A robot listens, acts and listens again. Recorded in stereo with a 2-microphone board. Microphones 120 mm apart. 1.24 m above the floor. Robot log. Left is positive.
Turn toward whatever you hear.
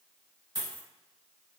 note: The dropped coin: about 35° right or 145° right.
cmd yaw -35
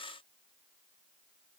cmd idle
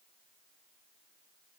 end: I heard a dropped coin, but can't make it out now. It was about straight ahead or 110° right.